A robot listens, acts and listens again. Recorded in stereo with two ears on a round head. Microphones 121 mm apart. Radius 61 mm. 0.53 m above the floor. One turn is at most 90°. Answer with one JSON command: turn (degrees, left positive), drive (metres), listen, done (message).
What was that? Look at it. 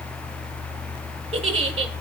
{"turn": -50}
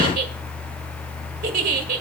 {"turn": -75}
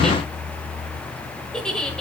{"done": "Found it: a giggle, straight ahead, 1 to 2 m away."}